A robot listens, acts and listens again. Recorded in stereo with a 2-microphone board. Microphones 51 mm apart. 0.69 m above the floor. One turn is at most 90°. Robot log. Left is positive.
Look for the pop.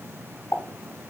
cmd yaw +90
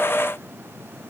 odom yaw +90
end: Facing where the pop came from. I can't hear it now.